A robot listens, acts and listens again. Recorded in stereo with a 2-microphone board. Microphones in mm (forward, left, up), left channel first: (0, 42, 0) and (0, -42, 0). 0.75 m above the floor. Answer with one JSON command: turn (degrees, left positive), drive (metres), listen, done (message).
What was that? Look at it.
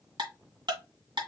{"turn": -70}
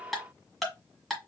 {"done": "Found it: ticking, straight ahead."}